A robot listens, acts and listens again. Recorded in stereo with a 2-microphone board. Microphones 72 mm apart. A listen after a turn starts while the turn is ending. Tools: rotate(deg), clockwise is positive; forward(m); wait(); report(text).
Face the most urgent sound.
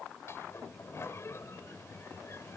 wait()
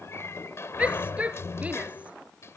rotate(20)
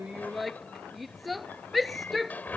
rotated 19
report("Facing the shout.")